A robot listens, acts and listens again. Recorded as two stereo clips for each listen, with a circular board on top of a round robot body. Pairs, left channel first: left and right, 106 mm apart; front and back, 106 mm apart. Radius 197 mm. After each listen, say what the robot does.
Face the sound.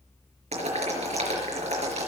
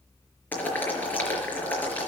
Turn 75° right.
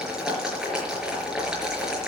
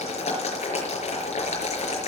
Facing the boiling.